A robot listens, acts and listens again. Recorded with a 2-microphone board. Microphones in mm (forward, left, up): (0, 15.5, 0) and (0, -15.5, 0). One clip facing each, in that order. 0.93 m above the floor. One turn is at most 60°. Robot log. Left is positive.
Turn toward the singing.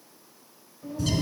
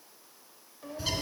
note: The singing: about 65° right or 115° right.
cmd yaw -60
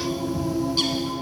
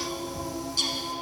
note: So it is at 20° left.
cmd yaw +20
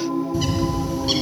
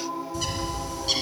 note: The singing is now 10° left.
cmd yaw +10
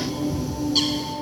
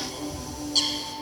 cmd idle
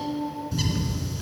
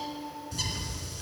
note: The singing is now 40° left.
cmd yaw +40
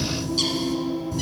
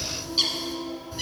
note: The singing is now 15° left.
cmd yaw +15
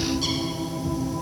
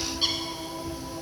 cmd idle
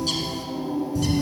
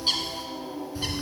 end: Found it: singing, straight ahead.